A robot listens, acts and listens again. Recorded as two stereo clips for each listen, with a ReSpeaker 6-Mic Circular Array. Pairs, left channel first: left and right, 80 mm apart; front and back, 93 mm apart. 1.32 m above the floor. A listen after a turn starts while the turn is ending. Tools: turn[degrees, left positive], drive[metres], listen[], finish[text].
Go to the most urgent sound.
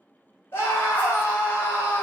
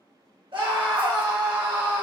Thought: The scream: 150° left.
Action: turn[150]
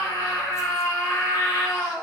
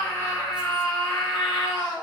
Thought: The scream is now 35° left.
Action: turn[35]
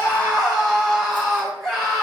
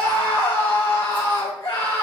Action: drive[1.0]
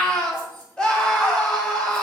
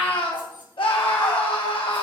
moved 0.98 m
Thought: The scream is now 10° left.
Action: turn[10]
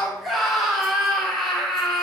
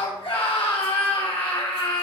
Action: drive[1.0]
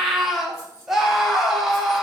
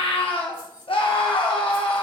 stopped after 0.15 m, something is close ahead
Action: finish[I am next to the scream.]